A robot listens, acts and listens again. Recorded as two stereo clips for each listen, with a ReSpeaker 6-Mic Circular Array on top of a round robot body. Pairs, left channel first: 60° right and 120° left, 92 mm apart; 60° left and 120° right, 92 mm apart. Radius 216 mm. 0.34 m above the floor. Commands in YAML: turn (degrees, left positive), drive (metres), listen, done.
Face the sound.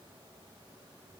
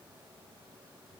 listen: true
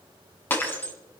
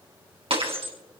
turn: -130
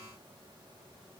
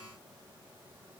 done: "I heard breaking glass from this way, but can't make it out now."